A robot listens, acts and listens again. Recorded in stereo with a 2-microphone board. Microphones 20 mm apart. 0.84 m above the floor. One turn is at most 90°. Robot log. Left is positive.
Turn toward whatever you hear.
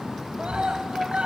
note: The scream: about 75° right or 105° right.
cmd yaw -75
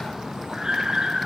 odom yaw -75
note: So it is at 35° right.
cmd yaw -35
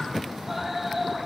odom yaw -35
end: Found it: a scream, straight ahead, over 4 m away.